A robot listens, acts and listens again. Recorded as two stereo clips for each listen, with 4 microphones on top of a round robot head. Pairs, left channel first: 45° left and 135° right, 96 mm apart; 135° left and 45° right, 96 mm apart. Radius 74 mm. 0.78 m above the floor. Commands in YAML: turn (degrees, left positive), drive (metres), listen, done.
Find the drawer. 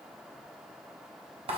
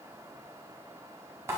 listen: true
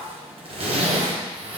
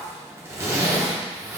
listen: true
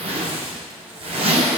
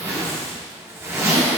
done: "I can't make out a drawer, only a zipper."